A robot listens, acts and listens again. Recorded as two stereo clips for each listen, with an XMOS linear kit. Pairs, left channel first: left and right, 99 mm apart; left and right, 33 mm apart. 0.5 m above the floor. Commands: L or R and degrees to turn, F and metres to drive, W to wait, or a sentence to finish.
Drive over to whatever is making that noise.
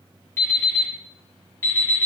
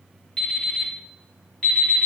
L25
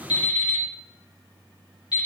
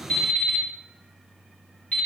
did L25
L130
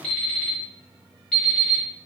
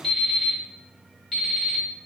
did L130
F1.0
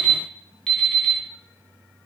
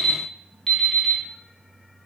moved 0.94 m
F1.0
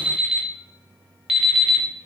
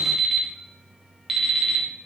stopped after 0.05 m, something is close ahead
I am next to the alarm clock.